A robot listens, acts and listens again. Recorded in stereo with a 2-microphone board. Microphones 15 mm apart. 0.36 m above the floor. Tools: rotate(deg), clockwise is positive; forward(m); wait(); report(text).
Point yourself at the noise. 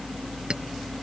rotate(60)
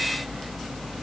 wait()
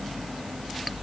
wait()
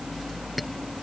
report("I heard a clink, but can't make it out now. It was about straight ahead or 60° right.")